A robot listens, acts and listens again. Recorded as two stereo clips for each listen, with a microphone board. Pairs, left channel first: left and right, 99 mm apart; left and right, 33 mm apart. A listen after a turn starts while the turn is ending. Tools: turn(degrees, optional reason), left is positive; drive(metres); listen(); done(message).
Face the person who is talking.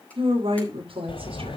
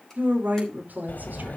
turn(degrees=-70, reason="The woman speaking: about 70° right or 110° right.")
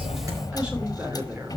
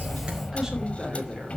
listen()
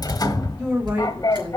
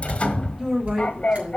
turn(degrees=-15, reason="So it is at 15° right.")
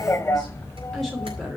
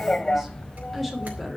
done("Found it: a woman speaking, straight ahead.")